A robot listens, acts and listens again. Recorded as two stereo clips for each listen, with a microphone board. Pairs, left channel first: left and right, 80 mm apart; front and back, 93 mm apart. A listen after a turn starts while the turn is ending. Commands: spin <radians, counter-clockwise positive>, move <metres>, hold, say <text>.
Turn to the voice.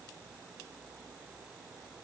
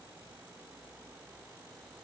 hold
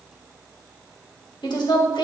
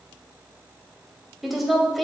spin 1.57
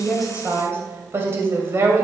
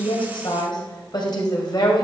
spin -0.61
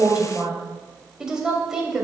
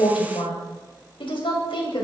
spin -0.17
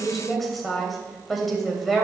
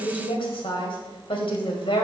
say Found it: a woman speaking, straight ahead.